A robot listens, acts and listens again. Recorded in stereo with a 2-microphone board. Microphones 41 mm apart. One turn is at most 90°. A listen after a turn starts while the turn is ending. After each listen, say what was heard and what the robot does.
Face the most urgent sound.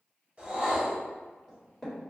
Keep listening.
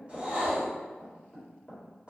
Keep listening.
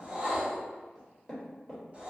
I can't make out anything urgent to turn to.